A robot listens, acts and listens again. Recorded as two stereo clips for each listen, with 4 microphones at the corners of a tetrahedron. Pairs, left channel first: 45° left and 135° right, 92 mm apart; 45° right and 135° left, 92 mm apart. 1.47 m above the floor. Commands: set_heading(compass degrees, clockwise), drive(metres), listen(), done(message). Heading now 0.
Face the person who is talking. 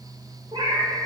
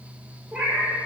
listen()
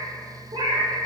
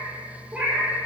listen()
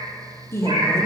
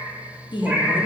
set_heading(15)
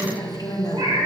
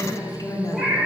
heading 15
done("Facing the woman speaking, under 1 m away.")